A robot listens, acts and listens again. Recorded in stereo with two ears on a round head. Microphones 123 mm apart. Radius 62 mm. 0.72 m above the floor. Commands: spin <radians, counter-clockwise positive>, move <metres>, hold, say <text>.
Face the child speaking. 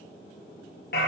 hold
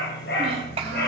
spin -0.79
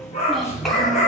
hold
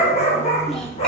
hold
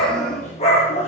say I heard a child speaking, but can't make it out now. It was about straight ahead or 90° right.